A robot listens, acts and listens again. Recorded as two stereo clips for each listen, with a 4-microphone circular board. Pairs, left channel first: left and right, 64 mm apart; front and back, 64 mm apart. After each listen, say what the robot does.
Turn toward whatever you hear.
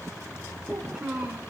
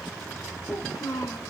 Turn 10° right.
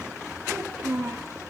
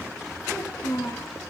Turn 10° right.
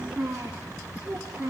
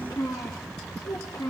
Facing the child speaking, over 4 m away.